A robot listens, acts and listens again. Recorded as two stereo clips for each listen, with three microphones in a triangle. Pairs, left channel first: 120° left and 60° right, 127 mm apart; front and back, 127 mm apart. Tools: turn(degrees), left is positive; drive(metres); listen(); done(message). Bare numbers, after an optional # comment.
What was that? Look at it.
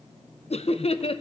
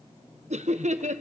# The laughter: 160° left.
turn(160)
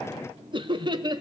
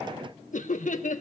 done("Found it: laughter, straight ahead, 2 to 4 m away.")